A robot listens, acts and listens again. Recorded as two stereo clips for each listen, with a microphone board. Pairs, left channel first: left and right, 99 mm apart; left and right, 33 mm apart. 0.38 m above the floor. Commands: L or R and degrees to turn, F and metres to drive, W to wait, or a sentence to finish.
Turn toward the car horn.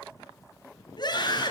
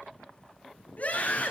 W
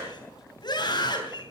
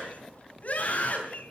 W
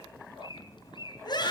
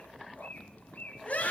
I can't make out a car horn, only a bird and a scream.